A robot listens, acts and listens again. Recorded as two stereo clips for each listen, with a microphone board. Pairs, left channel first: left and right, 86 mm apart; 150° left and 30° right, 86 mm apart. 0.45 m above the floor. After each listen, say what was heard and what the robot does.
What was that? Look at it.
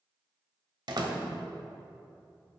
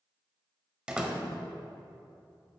The door slam: 105° right. Turn 105° right.
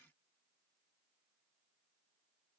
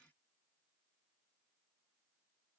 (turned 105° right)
I heard a door slam from this way, but can't make it out now.